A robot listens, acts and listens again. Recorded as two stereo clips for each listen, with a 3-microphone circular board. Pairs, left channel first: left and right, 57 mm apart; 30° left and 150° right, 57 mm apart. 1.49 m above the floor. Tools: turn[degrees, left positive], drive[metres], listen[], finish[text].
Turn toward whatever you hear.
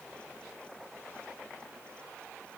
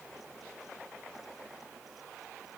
Action: listen[]
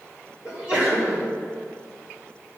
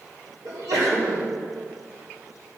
Thought: The sneeze: 160° right.
Action: turn[-160]
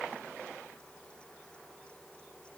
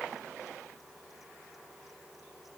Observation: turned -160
Action: finish[I heard a sneeze from this way, but can't make it out now.]